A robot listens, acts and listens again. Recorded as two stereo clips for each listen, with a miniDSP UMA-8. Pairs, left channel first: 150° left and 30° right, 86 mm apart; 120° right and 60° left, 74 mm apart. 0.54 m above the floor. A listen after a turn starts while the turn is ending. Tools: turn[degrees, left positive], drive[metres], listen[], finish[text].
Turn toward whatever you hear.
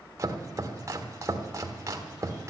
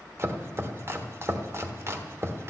Thought: The chopping: 15° left.
Action: turn[15]
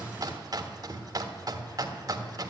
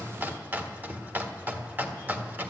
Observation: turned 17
Action: finish[Found it: chopping, straight ahead.]